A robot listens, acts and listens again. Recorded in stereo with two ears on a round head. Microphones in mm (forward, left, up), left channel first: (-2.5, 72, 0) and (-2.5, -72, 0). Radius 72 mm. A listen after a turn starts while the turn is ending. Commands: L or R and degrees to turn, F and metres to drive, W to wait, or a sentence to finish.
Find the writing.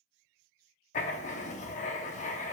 L45
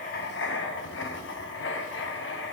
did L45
L85
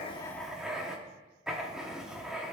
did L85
Found it: writing, straight ahead, under 1 m away.